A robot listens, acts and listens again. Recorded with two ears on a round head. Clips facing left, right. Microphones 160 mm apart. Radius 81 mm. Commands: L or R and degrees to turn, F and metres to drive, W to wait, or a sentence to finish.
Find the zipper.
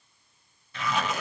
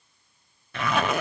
R45
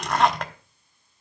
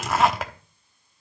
Facing the zipper.